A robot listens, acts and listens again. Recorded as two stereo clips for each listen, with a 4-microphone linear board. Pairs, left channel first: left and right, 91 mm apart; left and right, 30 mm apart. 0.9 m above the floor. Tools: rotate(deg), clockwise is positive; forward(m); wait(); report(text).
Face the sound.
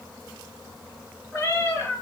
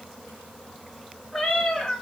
rotate(-30)
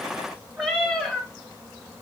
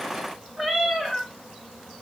report("Facing the cat meowing, 1 to 2 m away.")